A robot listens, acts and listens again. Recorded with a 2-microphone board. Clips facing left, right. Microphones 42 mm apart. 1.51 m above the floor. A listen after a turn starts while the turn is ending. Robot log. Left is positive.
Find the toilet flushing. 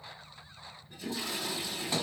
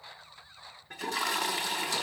cmd yaw -90
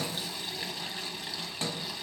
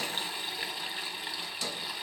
note: So it is at 10° right.
cmd yaw -10
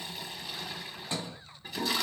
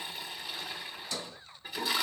end: Found it: a toilet flushing, straight ahead.